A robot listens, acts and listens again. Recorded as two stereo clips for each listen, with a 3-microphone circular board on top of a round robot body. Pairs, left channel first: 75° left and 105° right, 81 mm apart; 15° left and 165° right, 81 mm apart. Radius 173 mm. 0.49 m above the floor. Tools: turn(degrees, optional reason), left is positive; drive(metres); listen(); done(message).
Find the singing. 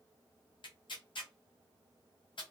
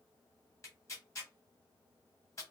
listen()
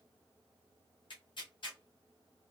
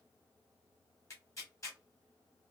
listen()
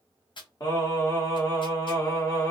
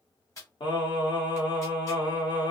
turn(degrees=30, reason="The singing: 30° left.")
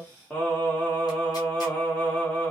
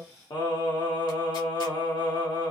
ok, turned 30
done("Found it: singing, straight ahead.")